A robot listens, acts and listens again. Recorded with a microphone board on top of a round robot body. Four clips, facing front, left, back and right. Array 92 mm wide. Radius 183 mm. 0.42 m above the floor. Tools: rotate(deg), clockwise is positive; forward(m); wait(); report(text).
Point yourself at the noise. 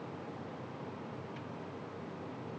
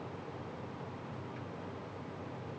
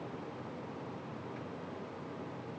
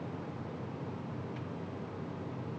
wait()
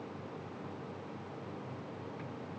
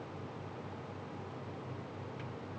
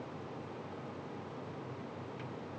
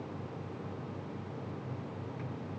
wait()
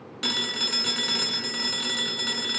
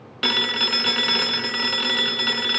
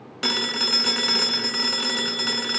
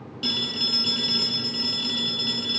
rotate(-115)
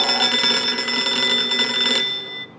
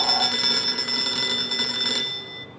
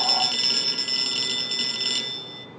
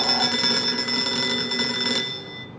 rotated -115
report("Facing the phone ringing, 1 to 2 m away.")